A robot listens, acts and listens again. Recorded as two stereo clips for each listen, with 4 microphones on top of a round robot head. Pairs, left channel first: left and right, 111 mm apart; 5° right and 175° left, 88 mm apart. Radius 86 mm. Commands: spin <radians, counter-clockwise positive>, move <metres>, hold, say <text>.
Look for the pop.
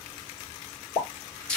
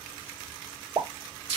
spin 2.18
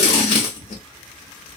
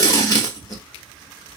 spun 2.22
say I heard a pop from this way, but can't make it out now.